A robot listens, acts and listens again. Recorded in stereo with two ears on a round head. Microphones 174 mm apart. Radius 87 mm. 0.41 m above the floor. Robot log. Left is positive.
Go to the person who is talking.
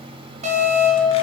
cmd idle
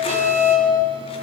cmd idle
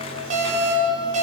end: I can't make out anyone speaking, only an alarm.